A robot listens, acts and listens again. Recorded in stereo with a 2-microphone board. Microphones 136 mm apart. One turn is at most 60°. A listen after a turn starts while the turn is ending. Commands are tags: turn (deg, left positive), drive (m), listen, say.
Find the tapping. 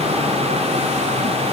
<listen/>
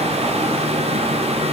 <listen/>
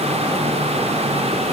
<say>I can't make out tapping.</say>